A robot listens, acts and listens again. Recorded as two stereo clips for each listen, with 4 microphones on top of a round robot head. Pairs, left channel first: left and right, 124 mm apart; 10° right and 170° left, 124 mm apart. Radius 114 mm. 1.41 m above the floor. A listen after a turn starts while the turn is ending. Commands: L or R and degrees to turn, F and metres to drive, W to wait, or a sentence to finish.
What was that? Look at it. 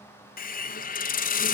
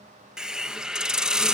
L85
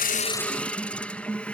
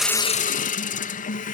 Facing the hiss.